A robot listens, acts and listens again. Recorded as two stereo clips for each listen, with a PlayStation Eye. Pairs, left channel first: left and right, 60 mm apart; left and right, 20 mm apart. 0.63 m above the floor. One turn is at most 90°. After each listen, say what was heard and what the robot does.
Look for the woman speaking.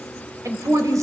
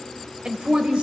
The woman speaking: about 65° right or 115° right. Turn 65° right.
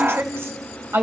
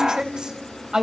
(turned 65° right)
So it is at 40° right. Turn 40° right.
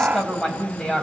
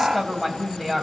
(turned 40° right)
The woman speaking is now 10° left. Turn 10° left.
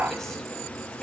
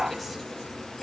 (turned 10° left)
Keep listening.
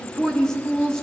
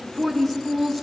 The woman speaking is now 10° left. Turn 10° left.
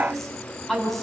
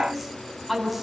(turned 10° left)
Facing the woman speaking.